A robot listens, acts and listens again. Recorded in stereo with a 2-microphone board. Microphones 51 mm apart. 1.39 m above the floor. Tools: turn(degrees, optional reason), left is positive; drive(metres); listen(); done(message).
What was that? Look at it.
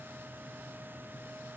listen()
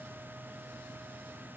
listen()
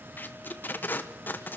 turn(degrees=35, reason="The tape being pulled: about 35° left or 145° left.")
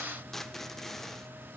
done("Facing the tape being pulled, 1 to 2 m away.")